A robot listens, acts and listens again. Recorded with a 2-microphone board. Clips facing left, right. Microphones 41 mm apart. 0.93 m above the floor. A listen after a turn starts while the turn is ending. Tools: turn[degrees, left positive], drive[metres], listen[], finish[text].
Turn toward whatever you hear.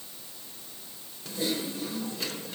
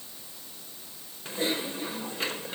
Thought: The typing on a keyboard: about 40° right or 140° right.
Action: turn[-40]
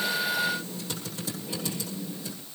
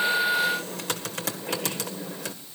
Thought: So it is at 100° right.
Action: turn[-100]
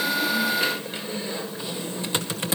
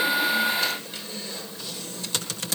Thought: The typing on a keyboard is now 25° left.
Action: turn[25]
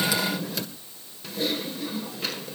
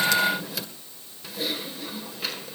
Action: finish[Found it: typing on a keyboard, straight ahead, 1 to 2 m away.]